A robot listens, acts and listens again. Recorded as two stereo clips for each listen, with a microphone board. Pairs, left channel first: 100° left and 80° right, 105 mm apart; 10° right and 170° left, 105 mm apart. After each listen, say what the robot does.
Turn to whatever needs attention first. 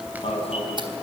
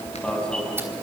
Turn 70° left.
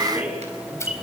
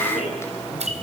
Facing the alarm.